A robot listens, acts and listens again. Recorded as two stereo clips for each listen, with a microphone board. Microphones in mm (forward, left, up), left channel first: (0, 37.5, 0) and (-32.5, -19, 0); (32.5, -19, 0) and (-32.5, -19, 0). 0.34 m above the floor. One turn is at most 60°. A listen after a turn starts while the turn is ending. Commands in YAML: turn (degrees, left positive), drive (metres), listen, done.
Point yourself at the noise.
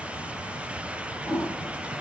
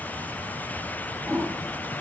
turn: -60
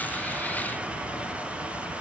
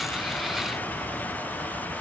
turn: -60
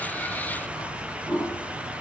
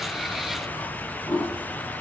turn: -30
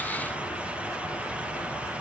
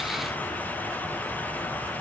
listen: true
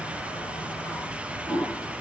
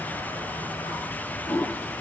done: "Facing the toilet flushing."